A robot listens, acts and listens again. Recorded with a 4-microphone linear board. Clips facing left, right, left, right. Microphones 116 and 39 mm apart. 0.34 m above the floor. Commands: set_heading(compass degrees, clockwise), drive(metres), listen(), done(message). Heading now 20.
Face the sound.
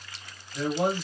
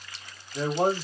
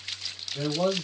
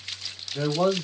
set_heading(60)
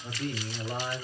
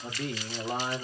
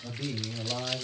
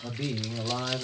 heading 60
set_heading(150)
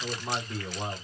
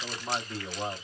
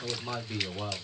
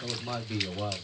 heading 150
done("Facing the man speaking, 1 to 2 m away.")